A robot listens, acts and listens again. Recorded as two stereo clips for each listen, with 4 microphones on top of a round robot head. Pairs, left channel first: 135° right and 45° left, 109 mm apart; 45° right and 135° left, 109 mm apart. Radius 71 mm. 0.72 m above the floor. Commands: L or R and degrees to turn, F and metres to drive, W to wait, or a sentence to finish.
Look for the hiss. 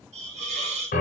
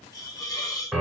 L15
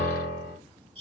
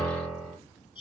Found it: a hiss, straight ahead.